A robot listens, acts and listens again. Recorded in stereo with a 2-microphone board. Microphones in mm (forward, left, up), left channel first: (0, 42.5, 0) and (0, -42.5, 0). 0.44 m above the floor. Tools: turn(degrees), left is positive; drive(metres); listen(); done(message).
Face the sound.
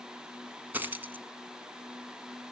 turn(degrees=-25)
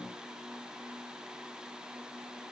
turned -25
listen()
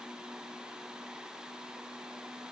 done("I heard a dropped coin, but can't make it out now. It was about straight ahead or 130° right.")